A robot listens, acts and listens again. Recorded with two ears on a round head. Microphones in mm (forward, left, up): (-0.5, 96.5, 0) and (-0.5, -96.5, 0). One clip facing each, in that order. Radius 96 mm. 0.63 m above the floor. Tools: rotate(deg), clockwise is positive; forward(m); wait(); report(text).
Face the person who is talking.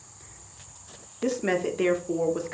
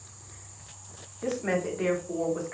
rotate(-55)
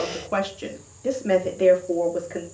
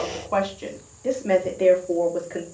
report("Facing the woman speaking.")